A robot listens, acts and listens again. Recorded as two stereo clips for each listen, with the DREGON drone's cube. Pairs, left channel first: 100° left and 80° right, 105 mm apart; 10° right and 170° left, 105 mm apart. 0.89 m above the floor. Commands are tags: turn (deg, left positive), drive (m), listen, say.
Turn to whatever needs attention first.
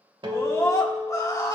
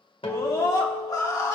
<turn deg="45"/>
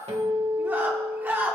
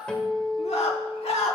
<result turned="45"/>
<turn deg="-10"/>
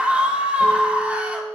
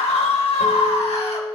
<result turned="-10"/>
<say>Found it: a scream, straight ahead, 2 to 4 m away.</say>